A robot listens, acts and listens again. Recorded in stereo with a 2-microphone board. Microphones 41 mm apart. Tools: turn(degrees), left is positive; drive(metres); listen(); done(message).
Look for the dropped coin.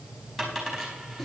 turn(degrees=30)
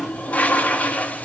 listen()
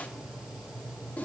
done("I heard a dropped coin, but can't make it out now. It was about 30° right or 150° left.")